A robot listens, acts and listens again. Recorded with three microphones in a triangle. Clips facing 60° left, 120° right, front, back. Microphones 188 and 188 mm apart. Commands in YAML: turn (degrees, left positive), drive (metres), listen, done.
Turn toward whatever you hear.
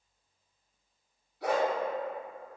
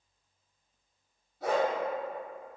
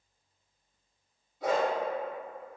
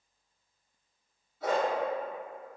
turn: -75
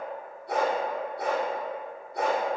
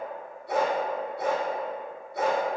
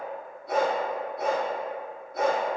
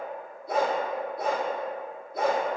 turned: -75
turn: 20
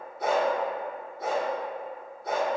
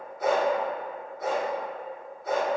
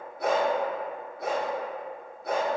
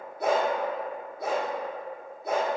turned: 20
done: "Found it: a dog barking, straight ahead."